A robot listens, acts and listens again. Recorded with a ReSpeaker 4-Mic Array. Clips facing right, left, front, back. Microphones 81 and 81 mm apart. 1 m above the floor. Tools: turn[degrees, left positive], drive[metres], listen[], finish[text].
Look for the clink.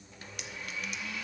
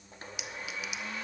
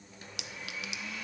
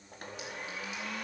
Action: finish[Facing the clink, under 1 m away.]